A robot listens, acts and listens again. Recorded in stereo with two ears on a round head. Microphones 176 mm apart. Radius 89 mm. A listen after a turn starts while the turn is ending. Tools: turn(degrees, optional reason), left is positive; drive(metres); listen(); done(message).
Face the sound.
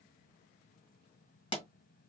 turn(degrees=25, reason="The pop: about 25° left or 155° left.")
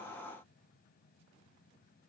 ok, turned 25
listen()
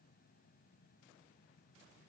done("I heard a pop, but can't make it out now. It was about straight ahead or 130° left.")